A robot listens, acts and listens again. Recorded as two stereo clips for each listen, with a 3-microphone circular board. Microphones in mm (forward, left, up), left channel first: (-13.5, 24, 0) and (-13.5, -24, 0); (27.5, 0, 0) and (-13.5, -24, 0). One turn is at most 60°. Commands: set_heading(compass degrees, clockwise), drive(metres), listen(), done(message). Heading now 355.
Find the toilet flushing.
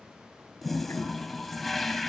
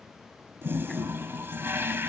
set_heading(295)
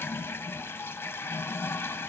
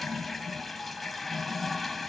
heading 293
set_heading(233)
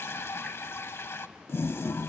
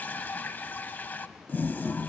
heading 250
set_heading(190)
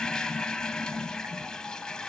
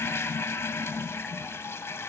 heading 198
set_heading(178)
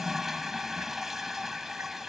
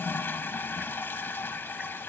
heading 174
done("Found it: a toilet flushing, straight ahead.")